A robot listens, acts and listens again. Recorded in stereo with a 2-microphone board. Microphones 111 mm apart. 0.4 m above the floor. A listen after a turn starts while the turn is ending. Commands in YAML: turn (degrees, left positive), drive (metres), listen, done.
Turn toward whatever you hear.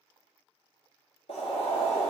turn: 90
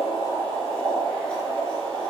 done: "Facing the boiling."